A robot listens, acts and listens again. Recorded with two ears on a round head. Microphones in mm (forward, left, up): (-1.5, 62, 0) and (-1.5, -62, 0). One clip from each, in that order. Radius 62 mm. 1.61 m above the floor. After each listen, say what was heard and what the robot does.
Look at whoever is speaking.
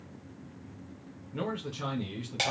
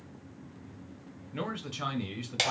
The man speaking: about 50° right or 130° right. Turn 50° right.
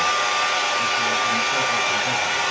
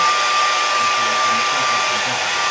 Keep listening.
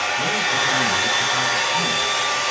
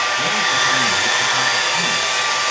Keep listening.
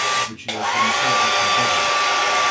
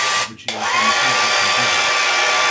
Facing the man speaking, 1 to 2 m away.